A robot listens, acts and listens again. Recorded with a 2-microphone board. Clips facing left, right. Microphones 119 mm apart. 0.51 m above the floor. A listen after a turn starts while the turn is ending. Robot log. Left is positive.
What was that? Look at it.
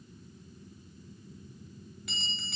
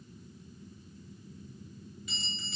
note: The bell: about 65° left or 115° left.
cmd yaw +65
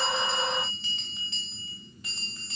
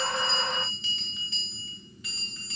note: So it is at 45° left.
cmd yaw +45
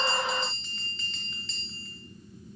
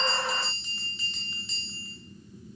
note: The bell is now 15° right.
cmd yaw -15
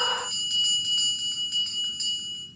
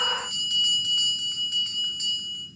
end: Facing the bell.